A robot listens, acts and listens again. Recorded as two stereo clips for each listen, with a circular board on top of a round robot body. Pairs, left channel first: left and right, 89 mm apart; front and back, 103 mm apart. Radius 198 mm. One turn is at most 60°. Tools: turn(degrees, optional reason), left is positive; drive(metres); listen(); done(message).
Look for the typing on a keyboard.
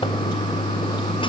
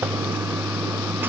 listen()
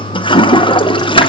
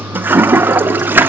listen()
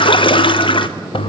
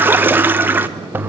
done("I can't make out typing on a keyboard, only a toilet flushing.")